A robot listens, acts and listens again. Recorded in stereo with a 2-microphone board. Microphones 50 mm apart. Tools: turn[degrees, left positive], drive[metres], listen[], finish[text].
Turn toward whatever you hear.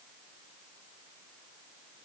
Action: listen[]
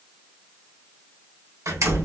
Action: turn[-90]
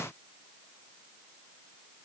Action: finish[I heard a door slam from this way, but can't make it out now.]